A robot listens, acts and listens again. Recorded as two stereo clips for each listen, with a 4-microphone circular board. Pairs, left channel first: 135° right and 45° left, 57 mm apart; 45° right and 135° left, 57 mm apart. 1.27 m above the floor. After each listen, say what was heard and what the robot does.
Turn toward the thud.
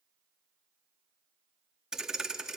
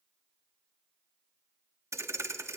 The thud: 125° left. Turn 125° left.
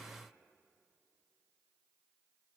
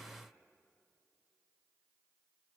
I heard a thud from this way, but can't make it out now.